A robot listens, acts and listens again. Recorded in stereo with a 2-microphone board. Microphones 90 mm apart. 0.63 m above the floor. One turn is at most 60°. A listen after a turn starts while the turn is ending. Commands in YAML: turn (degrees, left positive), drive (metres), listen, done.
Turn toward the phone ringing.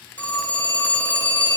turn: 30
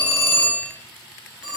turn: -10
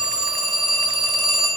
done: "Found it: a phone ringing, straight ahead."